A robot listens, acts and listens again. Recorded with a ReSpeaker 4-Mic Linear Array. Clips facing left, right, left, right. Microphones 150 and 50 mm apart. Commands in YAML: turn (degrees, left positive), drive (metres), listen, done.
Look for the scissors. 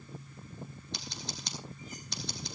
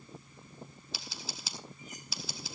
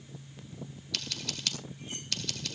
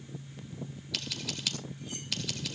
turn: -30
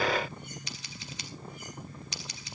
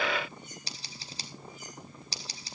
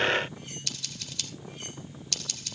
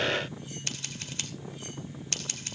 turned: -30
turn: -145
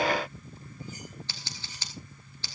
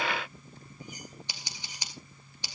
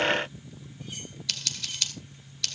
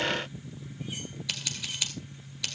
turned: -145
turn: -15
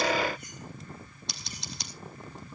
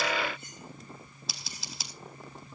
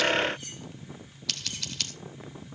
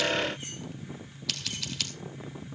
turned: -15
done: "Facing the scissors, 2 to 4 m away."